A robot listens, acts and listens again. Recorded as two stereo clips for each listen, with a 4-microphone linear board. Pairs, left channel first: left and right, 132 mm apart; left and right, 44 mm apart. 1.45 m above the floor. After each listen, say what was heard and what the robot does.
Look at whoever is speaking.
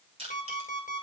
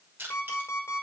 Keep listening.
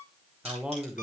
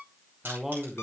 Turn 30° right.
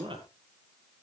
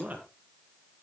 So it is at 145° right. Turn 145° right.
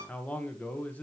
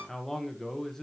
The man speaking is now 10° left. Turn 10° left.
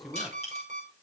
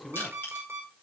Found it: a man speaking, straight ahead.